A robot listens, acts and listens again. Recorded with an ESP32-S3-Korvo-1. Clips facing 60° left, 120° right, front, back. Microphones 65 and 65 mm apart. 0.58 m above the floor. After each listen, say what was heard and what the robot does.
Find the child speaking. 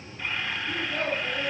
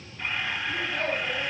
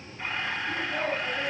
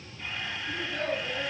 The child speaking: 70° left. Turn 70° left.
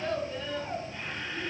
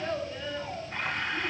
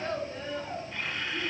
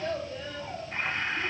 The child speaking is now 25° right. Turn 25° right.
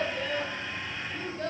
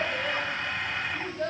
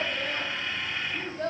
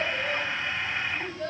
The child speaking is now 25° right. Turn 25° right.
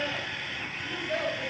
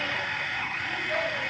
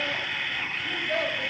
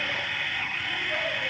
Found it: a child speaking, straight ahead, 2 to 4 m away.